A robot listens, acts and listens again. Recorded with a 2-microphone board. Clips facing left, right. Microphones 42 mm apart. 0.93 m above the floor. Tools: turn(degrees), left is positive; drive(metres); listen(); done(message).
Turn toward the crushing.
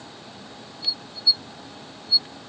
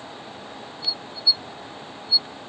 listen()
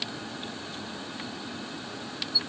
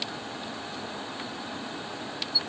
listen()
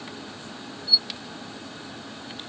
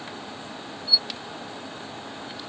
done("I can't make out crushing to turn to.")